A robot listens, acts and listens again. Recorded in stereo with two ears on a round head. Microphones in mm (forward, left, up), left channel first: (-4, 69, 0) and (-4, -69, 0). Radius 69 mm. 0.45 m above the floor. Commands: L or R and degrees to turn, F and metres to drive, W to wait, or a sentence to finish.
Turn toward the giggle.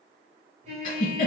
L55
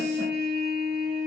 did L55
W
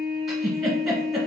Found it: a giggle, straight ahead.